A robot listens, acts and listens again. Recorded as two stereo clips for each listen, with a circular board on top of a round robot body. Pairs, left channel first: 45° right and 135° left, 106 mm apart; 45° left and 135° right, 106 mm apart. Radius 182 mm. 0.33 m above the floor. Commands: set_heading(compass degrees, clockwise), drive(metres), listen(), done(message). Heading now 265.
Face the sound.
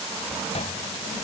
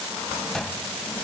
set_heading(305)
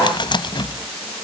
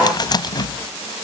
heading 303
done("Facing the cupboard door.")